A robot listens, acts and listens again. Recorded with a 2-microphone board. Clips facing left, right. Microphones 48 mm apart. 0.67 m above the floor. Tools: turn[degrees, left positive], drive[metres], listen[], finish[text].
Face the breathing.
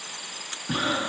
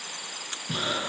Thought: The breathing: about 30° left or 150° left.
Action: turn[30]
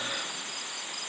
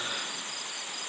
Action: listen[]
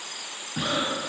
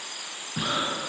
Action: finish[Facing the breathing, 1 to 2 m away.]